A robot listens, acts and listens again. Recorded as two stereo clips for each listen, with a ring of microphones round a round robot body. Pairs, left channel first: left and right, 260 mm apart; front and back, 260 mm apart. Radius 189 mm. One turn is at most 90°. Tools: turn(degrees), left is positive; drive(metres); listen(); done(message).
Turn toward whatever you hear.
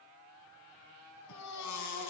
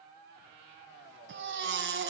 turn(degrees=90)
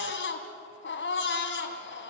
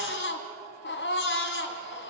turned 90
turn(degrees=45)
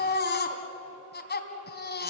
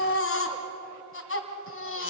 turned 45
turn(degrees=40)
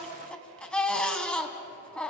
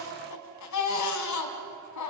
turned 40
done("Found it: a baby crying, straight ahead.")